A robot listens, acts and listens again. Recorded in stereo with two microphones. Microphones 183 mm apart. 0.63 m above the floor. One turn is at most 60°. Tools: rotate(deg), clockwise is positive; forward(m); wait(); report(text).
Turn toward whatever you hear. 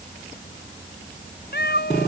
rotate(-60)
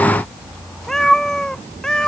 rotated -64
report("Found it: a cat meowing, straight ahead.")